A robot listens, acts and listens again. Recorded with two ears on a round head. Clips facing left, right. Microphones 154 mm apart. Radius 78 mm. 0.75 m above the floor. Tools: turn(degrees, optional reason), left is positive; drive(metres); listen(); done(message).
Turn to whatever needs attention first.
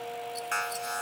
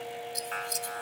turn(degrees=55, reason="The alarm: about 55° left or 125° left.")
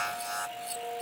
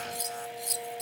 turn(degrees=75, reason="So it is at 75° left.")
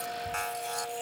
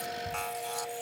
done("Found it: an alarm, straight ahead.")